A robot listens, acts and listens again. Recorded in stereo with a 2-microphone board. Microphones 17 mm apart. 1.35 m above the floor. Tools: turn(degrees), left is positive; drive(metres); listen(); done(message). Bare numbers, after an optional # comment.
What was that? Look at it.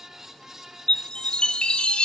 # The chime: about 60° left or 120° left.
turn(60)
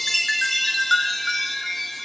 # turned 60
done("Found it: a chime, straight ahead.")